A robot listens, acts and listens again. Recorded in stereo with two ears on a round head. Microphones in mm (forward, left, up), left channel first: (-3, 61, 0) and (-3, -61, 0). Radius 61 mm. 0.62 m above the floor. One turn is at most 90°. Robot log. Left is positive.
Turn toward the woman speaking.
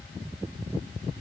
cmd idle
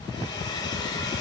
cmd idle
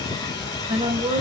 note: The woman speaking: about 35° right or 145° right.
cmd yaw -35
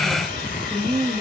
end: Facing the woman speaking.